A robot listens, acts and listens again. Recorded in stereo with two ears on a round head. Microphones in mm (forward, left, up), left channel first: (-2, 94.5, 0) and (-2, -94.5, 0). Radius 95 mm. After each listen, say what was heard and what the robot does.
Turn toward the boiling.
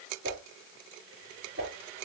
Keep listening.
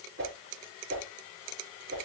Keep listening.
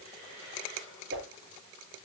I can't make out boiling, only a whoosh.